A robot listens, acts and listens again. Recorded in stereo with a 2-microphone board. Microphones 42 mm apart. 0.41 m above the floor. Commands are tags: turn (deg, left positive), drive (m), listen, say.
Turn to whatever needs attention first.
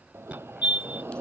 <turn deg="-30"/>
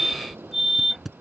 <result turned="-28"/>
<say>Facing the fire alarm.</say>